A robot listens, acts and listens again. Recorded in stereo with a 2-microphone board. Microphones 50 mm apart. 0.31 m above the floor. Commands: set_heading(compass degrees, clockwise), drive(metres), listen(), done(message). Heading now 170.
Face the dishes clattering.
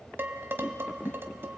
set_heading(215)
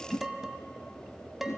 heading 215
set_heading(225)
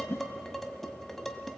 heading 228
done("Found it: dishes clattering, straight ahead, 1 to 2 m away.")